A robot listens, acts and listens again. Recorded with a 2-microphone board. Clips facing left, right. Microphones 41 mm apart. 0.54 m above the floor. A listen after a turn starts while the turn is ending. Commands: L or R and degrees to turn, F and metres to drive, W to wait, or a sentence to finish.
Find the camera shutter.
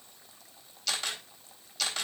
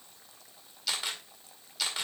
R30
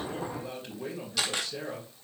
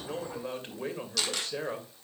L15
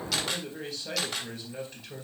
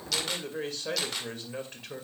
Facing the camera shutter.